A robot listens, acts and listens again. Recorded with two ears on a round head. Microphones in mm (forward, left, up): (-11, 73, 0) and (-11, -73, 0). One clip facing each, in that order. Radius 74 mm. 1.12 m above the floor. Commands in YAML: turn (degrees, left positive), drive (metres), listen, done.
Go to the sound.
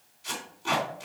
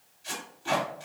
turn: 65
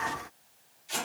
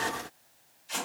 turn: 20
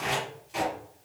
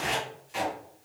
drive: 1.0
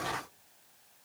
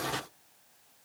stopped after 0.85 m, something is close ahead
listen: true
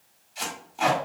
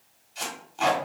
done: "I am next to the tape being pulled."